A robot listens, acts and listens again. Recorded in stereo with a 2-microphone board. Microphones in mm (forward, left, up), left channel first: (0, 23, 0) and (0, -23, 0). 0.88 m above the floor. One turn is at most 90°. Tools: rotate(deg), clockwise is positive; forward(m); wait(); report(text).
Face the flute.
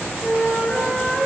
rotate(-30)
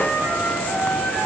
rotate(-90)
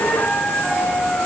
rotate(-30)
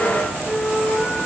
rotate(-10)
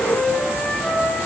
report("Facing the flute, over 4 m away.")